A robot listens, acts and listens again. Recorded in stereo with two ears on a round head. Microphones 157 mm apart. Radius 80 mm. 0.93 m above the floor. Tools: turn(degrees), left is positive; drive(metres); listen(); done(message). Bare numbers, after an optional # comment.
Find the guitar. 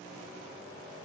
listen()
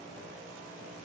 listen()
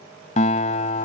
# The guitar: about 40° left or 140° left.
turn(40)
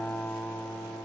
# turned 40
# So it is at 10° left.
turn(10)
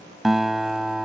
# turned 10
done("Found it: a guitar, straight ahead.")